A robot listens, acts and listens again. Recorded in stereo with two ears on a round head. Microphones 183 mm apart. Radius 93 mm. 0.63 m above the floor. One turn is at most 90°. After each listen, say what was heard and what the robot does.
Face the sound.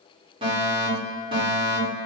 The fire alarm: about 30° right or 150° right. Turn 30° right.
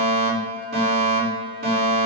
So it is at 115° right. Turn 90° right.
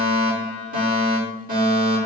The fire alarm is now 45° right. Turn 45° right.
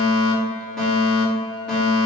Facing the fire alarm.